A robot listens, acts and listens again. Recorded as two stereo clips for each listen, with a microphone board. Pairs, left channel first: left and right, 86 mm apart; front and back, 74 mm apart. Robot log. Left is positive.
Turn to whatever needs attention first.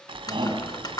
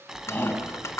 note: The shout: 65° right.
cmd yaw -65
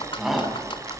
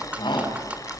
end: Facing the shout, over 4 m away.